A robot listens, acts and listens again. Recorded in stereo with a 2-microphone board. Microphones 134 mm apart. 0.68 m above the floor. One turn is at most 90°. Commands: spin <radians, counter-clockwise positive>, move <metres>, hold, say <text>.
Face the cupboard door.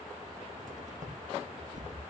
spin -1.22
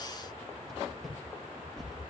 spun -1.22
say Found it: a cupboard door, straight ahead.